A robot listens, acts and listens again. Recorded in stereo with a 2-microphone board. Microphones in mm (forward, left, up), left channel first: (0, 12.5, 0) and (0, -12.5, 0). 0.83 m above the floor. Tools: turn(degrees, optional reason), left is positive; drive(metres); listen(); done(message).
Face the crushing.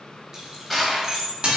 turn(degrees=30)
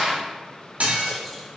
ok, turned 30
turn(degrees=-30, reason="So it is at 30° right.")
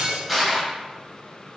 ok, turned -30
done("Found it: crushing, straight ahead, 1 to 2 m away.")